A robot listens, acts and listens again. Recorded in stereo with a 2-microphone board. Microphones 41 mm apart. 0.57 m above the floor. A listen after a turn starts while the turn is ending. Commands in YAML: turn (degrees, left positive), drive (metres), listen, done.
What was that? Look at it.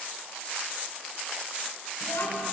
turn: 90
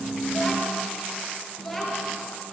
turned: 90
done: "Facing the child speaking."